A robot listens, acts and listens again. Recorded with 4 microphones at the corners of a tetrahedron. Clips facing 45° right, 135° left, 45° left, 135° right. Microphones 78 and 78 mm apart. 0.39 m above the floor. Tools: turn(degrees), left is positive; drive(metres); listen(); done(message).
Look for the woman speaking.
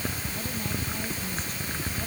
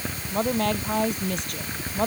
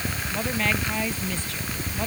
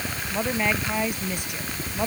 turn(degrees=150)
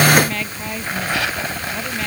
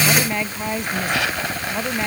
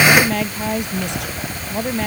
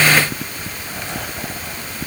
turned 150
turn(degrees=65)
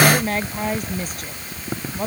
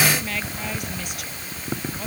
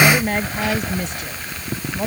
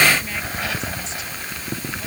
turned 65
done("Found it: a woman speaking, straight ahead.")